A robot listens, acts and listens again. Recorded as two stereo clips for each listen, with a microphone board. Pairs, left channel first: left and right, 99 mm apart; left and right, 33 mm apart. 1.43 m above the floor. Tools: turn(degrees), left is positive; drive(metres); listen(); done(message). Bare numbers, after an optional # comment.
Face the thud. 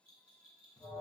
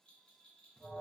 listen()
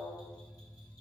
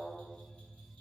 listen()
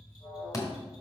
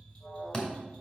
# The thud: about 35° left or 145° left.
turn(35)
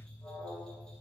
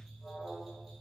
listen()
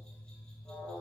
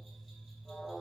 done("I heard a thud, but can't make it out now. It was about straight ahead or 110° left.")